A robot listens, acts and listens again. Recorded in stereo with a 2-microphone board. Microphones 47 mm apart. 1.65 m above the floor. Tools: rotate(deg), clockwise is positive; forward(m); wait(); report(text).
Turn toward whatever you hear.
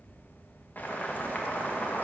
rotate(-45)
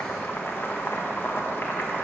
rotate(-80)
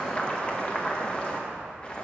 rotate(-30)
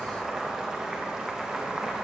rotate(20)
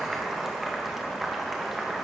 report("Found it: boiling, straight ahead, 1 to 2 m away.")